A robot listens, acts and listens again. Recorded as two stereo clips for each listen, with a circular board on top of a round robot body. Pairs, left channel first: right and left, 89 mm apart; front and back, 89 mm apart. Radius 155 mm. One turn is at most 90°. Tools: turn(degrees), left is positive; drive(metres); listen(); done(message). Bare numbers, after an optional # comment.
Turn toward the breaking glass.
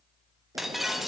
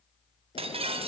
# The breaking glass: straight behind.
turn(90)
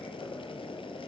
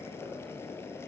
# Nothing new. It was at 90° left.
turn(90)
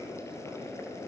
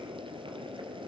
done("I heard breaking glass from this way, but can't make it out now.")